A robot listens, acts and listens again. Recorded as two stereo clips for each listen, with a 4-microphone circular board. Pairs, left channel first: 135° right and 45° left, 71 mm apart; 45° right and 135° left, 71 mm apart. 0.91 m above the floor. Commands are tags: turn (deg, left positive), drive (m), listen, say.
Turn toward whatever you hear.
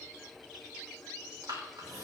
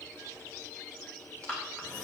<turn deg="25"/>
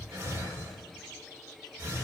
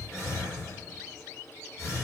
<say>Facing the breathing.</say>